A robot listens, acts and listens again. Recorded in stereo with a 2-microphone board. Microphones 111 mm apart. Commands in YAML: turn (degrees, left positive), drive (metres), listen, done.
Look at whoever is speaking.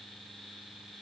listen: true
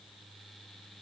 listen: true
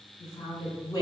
turn: 40
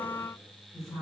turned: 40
done: "Facing the woman speaking, 1 to 2 m away."